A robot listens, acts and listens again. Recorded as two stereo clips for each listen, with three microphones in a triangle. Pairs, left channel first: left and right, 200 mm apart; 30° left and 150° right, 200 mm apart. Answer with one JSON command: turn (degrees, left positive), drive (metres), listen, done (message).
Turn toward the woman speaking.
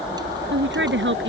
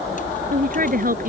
{"turn": -105}
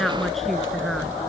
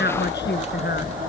{"done": "Facing the woman speaking."}